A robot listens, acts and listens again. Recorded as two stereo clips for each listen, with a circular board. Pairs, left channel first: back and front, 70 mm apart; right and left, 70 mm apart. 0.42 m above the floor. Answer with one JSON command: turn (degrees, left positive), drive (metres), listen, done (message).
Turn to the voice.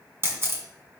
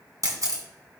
{"listen": true}
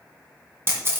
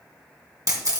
{"listen": true}
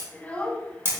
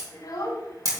{"turn": -105}
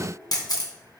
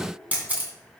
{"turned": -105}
{"listen": true}
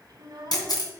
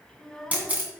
{"done": "Found it: a child speaking, straight ahead."}